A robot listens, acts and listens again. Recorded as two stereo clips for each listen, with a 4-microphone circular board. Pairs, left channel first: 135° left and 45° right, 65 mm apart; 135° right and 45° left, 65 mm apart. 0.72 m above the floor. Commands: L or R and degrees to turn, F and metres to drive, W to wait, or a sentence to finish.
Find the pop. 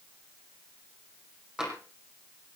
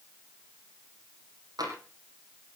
W
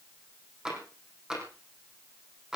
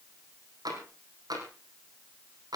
W
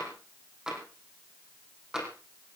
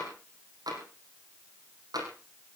I can't make out a pop, only tapping.